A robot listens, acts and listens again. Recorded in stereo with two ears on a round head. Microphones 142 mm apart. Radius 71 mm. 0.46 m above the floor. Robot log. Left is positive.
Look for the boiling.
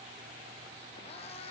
cmd idle
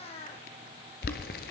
note: The boiling: about 65° left or 115° left.
cmd yaw +65
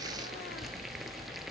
end: Found it: boiling, straight ahead.